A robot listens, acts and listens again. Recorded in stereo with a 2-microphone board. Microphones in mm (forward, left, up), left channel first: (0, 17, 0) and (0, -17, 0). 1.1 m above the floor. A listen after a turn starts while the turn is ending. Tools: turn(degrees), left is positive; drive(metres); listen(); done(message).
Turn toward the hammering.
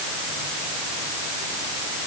listen()
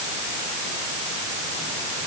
listen()
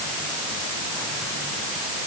done("I can't make out hammering.")